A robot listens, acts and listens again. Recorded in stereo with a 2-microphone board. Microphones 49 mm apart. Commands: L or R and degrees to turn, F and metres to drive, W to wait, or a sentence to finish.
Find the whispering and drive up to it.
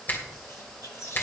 L70
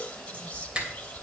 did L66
L25
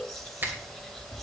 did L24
F1.0
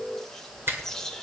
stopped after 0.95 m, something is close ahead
L10
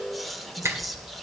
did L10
Arrived at the whispering, straight ahead.